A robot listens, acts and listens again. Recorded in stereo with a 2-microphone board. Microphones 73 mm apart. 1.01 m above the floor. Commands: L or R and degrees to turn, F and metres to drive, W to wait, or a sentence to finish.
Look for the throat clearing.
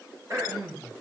R50
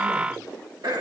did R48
R80
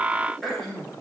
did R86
Found it: throat clearing, straight ahead, over 4 m away.